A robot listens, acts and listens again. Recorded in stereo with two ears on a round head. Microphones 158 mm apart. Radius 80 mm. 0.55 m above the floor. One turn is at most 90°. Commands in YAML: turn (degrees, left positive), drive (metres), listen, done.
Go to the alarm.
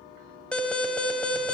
turn: 30
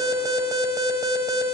turn: -20
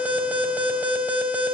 turn: -10
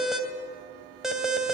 drive: 1.0
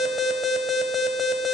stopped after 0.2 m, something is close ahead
done: "Blocked. The alarm is further on, straight ahead."